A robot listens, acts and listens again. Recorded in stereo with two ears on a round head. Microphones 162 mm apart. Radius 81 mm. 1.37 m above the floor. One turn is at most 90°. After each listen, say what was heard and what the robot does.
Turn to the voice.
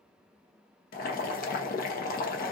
Keep listening.
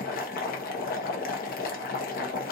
Keep listening.
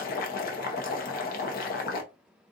I can't make out anyone speaking to turn to.